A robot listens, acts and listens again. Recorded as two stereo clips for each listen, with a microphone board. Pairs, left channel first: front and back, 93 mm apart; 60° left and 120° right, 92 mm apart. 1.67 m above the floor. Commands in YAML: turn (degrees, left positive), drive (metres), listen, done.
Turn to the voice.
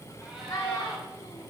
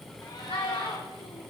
turn: 55
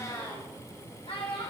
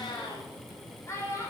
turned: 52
done: "Found it: a child speaking, straight ahead, 2 to 4 m away."